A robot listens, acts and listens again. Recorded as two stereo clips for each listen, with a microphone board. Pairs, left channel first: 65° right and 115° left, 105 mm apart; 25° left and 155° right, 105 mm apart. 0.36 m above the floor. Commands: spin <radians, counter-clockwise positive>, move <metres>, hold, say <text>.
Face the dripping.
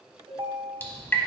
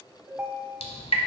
say Found it: dripping, straight ahead.